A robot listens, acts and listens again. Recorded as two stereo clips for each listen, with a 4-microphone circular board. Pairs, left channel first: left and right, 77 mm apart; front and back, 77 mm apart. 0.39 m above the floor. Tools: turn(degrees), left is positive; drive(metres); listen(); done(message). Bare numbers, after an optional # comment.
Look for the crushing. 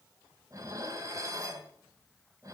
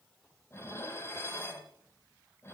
listen()
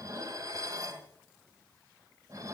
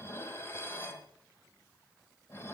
listen()
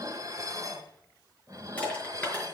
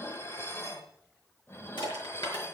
# The crushing: 15° left.
turn(15)
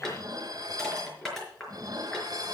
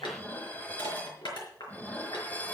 done("Found it: crushing, straight ahead.")